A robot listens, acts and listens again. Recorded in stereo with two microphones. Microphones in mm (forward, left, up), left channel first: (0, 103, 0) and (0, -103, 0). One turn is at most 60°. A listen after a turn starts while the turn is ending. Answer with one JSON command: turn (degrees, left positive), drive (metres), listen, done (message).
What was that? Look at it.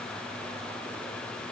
{"listen": true}
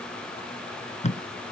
{"turn": 35}
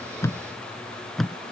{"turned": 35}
{"done": "Facing the tape being pulled."}